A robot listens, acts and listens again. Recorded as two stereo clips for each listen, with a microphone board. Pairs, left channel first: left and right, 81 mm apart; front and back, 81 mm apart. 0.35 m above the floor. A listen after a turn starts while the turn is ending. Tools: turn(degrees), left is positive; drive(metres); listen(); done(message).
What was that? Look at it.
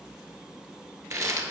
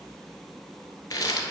turn(degrees=-40)
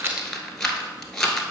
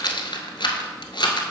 done("Found it: a rattle, straight ahead, 1 to 2 m away.")